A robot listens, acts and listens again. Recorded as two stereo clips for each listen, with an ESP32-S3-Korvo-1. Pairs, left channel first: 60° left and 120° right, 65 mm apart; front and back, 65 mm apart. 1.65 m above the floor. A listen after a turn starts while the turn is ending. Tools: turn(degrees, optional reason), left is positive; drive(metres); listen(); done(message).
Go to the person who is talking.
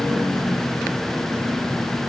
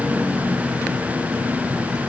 listen()
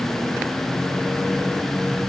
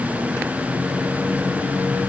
listen()
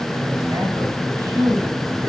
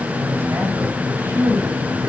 turn(degrees=-130, reason="The man speaking: 130° right.")
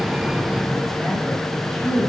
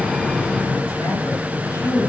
turn(degrees=-30, reason="The man speaking is now 30° right.")
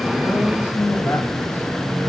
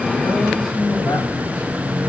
drive(metres=1.0)
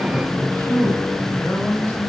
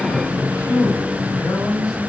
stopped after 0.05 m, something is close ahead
done("Something is in my way. I am facing the man speaking but have not reached it.")